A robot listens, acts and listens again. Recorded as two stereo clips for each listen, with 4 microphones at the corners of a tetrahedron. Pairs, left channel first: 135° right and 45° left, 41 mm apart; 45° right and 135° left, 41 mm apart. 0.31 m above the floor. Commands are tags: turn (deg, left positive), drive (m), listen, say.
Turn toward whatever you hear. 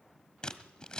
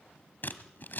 <turn deg="-70"/>
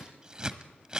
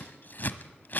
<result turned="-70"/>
<turn deg="-20"/>
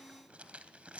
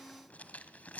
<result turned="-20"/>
<say>Found it: scissors, straight ahead, 1 to 2 m away.</say>